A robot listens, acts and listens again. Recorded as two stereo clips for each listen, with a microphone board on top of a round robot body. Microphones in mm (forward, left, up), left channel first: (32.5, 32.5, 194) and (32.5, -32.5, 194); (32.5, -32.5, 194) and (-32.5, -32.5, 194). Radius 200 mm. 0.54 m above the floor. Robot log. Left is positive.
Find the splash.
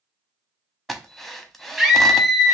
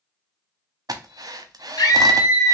cmd idle
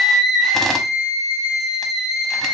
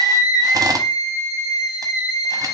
cmd idle
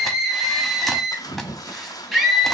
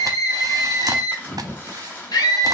note: The splash: 65° left.
cmd yaw +65
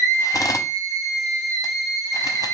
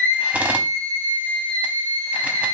end: Facing where the splash came from. I can't hear it now.